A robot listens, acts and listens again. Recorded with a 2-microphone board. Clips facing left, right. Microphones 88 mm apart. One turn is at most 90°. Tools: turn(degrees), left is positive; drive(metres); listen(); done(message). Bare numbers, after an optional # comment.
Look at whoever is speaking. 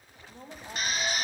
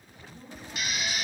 # The woman speaking: about 55° left or 125° left.
turn(55)
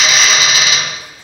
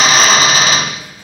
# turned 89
listen()
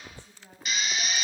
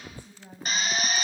# So it is at 15° right.
turn(-15)
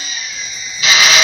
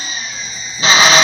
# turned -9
listen()
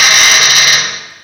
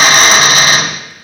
listen()
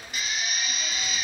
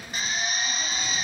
done("Facing where the woman speaking came from. I can't hear it now.")